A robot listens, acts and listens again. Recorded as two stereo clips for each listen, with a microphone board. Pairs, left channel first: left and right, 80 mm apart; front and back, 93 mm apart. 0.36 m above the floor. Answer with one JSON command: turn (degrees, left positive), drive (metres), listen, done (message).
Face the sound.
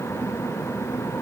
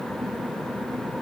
{"listen": true}
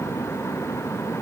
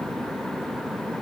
{"listen": true}
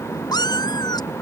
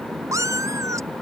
{"turn": 125}
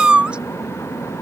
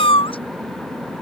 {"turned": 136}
{"turn": -10}
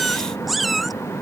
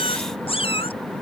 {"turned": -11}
{"done": "Found it: a cat meowing, straight ahead."}